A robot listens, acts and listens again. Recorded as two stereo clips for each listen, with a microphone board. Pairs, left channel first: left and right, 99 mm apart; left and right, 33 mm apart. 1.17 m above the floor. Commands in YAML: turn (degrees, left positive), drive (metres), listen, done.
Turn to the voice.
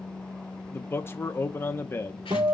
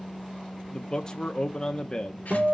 turn: 25
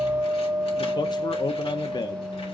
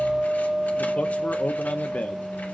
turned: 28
turn: 130
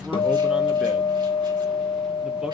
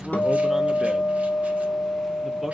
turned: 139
turn: -10
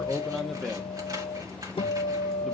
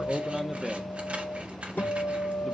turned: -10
done: "Found it: a man speaking, straight ahead, under 1 m away."